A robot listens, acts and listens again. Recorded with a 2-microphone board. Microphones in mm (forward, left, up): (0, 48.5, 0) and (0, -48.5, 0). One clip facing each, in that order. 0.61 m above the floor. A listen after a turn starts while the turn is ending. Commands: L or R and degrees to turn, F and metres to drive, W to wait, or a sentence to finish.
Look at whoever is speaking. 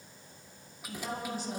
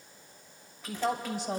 R75
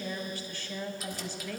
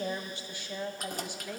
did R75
R15
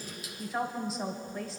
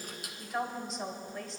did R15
Facing the woman speaking, 2 to 4 m away.